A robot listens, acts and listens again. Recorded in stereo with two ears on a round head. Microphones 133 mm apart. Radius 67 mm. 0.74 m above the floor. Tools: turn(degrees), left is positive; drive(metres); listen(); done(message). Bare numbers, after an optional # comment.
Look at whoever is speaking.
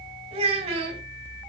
# The child speaking: about 45° right or 135° right.
turn(-45)
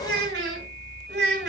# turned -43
# So it is at 95° right.
turn(-95)
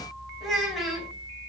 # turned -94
done("Facing the child speaking.")